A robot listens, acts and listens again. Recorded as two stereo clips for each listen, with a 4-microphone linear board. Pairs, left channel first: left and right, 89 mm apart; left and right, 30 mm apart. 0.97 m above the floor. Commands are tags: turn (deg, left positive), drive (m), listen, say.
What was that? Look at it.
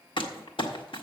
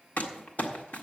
<turn deg="90"/>
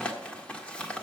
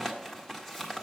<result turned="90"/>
<turn deg="15"/>
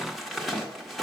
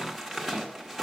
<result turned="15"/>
<say>Facing the crumpling, 1 to 2 m away.</say>